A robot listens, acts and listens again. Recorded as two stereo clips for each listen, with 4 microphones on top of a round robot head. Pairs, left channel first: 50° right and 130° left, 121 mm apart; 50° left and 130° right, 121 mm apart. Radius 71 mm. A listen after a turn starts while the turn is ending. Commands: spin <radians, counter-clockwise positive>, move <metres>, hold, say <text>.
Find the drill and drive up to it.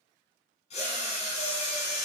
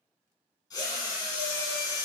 spin -0.17
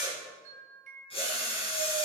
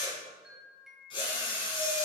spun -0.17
move 1.0
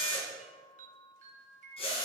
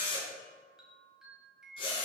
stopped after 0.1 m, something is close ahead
say Blocked. The drill is further on, straight ahead.